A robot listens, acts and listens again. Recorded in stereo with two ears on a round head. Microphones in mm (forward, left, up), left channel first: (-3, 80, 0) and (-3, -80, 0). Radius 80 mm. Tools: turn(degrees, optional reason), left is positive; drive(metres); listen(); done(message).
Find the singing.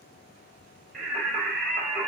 turn(degrees=30)
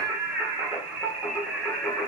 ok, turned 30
turn(degrees=30)
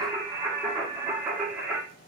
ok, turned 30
done("Facing the singing, 1 to 2 m away.")